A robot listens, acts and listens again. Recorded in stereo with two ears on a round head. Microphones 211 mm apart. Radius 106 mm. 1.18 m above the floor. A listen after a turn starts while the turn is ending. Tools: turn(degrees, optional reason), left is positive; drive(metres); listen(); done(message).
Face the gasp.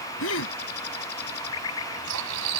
turn(degrees=60, reason="The gasp: about 60° left or 120° left.")
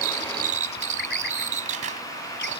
listen()
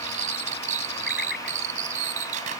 done("I heard a gasp, but can't make it out now. It was about straight ahead or 60° left.")